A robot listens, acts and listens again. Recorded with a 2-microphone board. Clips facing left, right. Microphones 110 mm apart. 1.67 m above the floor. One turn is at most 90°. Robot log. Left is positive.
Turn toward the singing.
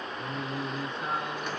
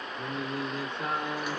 note: The singing: about 70° right or 110° right.
cmd yaw -70
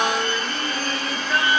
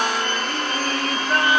cmd idle
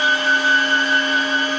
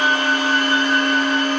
note: So it is at 55° right.
cmd yaw -55
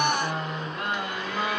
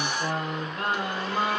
note: The singing is now 40° right.
cmd yaw -40
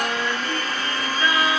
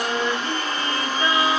note: The singing is now 25° right.
cmd yaw -25
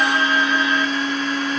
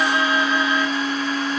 cmd idle
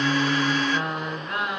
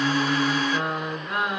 end: Found it: singing, straight ahead, 1 to 2 m away.